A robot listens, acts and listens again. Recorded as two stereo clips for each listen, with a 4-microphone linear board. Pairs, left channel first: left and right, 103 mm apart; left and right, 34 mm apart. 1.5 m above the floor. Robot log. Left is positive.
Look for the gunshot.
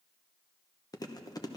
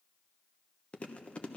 cmd idle
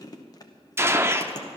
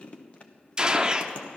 note: The gunshot: about 25° right or 155° right.
cmd yaw -25
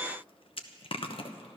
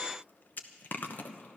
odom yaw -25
cmd idle
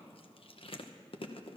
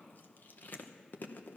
end: I heard a gunshot, but can't make it out now. It was about straight ahead or 130° right.